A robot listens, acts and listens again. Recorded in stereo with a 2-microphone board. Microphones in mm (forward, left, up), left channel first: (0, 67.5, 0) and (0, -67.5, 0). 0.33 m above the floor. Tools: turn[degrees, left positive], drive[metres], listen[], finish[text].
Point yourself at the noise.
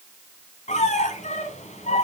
Thought: The squeak: about 65° left or 115° left.
Action: turn[65]
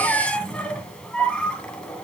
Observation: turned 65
Thought: So it is at 10° left.
Action: turn[10]
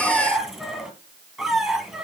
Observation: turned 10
Action: finish[Found it: a squeak, straight ahead.]